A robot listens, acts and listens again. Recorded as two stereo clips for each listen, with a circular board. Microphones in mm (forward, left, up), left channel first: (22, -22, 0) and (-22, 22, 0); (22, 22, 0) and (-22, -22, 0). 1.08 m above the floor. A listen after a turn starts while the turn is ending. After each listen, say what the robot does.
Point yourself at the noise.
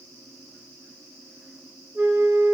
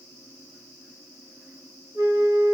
Turn 165° right.
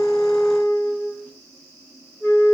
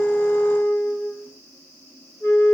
Found it: a flute, straight ahead, 2 to 4 m away.